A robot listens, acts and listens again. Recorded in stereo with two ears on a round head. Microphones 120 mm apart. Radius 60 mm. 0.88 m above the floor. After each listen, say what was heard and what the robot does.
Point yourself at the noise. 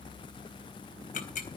The ticking: about 65° left or 115° left. Turn 65° left.
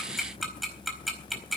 Facing the ticking, over 4 m away.